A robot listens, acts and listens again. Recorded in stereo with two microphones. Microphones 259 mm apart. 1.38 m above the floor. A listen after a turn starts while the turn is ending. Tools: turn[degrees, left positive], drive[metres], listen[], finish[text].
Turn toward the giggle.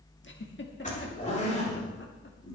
Thought: The giggle: about 45° left or 135° left.
Action: turn[45]
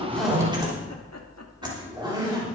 Action: listen[]
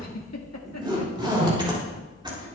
Thought: So it is at 90° left.
Action: turn[90]
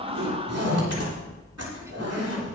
Action: listen[]
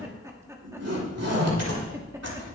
Thought: The giggle is now 10° right.
Action: turn[-10]
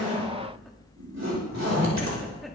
Action: listen[]
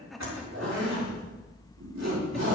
Action: finish[Facing the giggle.]